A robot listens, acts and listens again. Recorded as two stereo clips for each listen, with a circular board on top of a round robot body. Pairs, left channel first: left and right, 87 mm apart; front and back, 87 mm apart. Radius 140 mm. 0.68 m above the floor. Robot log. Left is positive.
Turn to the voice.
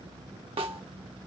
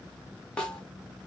cmd idle
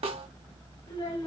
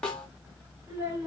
note: The child speaking: 115° left.
cmd yaw +115
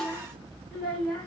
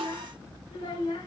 note: The child speaking is now 10° left.
cmd yaw +10
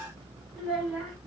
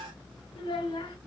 end: Facing the child speaking, 1 to 2 m away.